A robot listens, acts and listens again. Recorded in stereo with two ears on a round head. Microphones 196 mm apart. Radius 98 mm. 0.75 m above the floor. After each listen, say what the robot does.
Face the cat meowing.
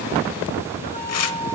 Keep listening.
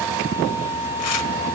Keep listening.
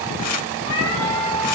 Turn 65° left.
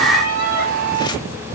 Keep listening.
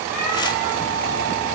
Keep listening.
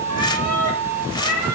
Turn 35° left.
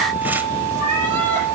Keep listening.
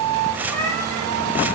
Turn 10° left.
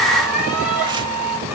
Found it: a cat meowing, straight ahead.